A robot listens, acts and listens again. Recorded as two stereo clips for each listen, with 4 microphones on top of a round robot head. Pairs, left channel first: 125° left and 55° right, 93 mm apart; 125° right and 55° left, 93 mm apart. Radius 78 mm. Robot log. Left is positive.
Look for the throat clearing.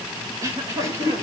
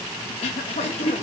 note: The throat clearing: 110° right.
cmd yaw -110
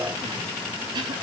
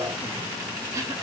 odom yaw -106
end: Found it: throat clearing, straight ahead.